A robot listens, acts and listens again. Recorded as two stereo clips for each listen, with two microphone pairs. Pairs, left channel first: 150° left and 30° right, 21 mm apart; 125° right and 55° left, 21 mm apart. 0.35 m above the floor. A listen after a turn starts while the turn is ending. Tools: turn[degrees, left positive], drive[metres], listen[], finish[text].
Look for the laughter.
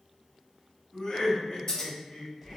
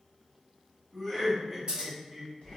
Thought: The laughter: 155° left.
Action: turn[155]
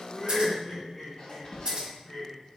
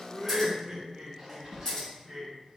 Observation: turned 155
Thought: The laughter is now 95° left.
Action: turn[95]
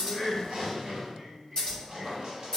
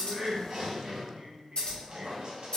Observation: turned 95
Thought: The laughter is now 15° left.
Action: turn[15]
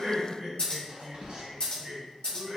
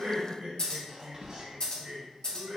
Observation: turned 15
Action: finish[Found it: laughter, straight ahead.]